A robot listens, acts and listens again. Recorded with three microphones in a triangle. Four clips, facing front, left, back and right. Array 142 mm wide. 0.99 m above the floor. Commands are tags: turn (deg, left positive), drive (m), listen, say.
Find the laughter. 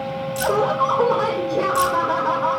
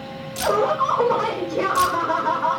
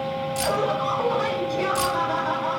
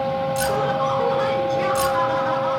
<turn deg="30"/>
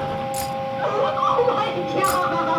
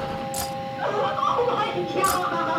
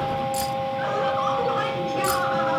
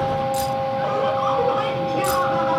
<say>Facing the laughter, over 4 m away.</say>